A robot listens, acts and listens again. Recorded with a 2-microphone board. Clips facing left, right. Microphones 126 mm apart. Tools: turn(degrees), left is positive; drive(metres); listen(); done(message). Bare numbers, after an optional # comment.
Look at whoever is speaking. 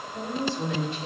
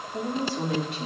# The woman speaking: about 75° right or 105° right.
turn(-75)
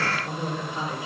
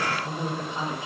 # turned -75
# So it is at 25° right.
turn(-25)
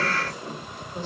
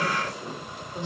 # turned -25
# The woman speaking is now 20° right.
turn(-20)
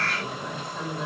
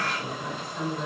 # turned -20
done("Facing the woman speaking, over 4 m away.")